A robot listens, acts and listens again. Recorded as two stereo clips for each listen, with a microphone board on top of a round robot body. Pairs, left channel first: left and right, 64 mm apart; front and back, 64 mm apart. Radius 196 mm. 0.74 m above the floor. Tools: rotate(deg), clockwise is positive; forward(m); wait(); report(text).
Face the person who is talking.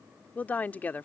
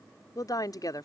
rotate(-25)
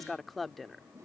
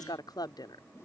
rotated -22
report("Found it: a woman speaking, straight ahead.")